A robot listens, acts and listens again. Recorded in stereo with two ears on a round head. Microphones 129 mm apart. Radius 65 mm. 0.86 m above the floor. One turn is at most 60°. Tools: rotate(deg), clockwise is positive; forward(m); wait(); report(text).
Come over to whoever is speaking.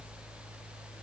wait()
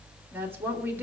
rotate(15)
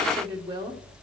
rotate(60)
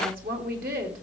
rotate(60)
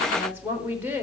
rotate(15)
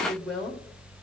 forward(1.0)
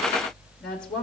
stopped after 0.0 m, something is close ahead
report("Blocked. The woman speaking is further on, straight ahead.")